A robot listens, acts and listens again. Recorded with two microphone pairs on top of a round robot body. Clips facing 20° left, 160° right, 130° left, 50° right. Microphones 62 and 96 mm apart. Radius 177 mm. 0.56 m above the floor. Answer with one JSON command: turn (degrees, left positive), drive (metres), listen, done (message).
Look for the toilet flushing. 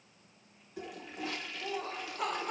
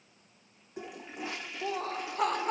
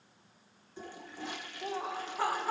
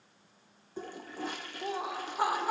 {"turn": -90}
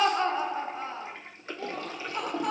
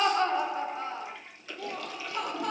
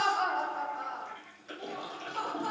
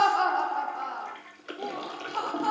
{"turn": -30}
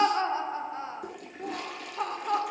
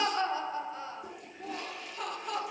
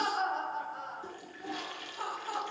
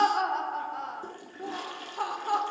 {"done": "Found it: a toilet flushing, straight ahead, 2 to 4 m away."}